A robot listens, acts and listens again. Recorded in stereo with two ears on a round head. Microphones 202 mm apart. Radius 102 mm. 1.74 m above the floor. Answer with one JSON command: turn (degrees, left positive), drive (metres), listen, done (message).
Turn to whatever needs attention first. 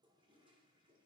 {"listen": true}
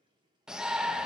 {"turn": -30}
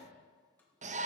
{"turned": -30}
{"turn": -145}
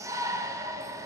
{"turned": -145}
{"turn": -15}
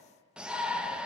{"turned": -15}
{"done": "Found it: a shout, straight ahead, under 1 m away."}